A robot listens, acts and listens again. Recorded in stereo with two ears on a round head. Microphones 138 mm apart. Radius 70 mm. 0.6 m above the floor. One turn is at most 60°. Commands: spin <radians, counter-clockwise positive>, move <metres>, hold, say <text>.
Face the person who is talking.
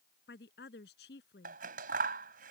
spin 1.05
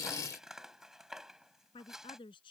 spin 0.52
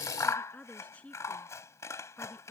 spin 0.17
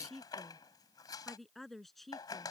say Facing the woman speaking.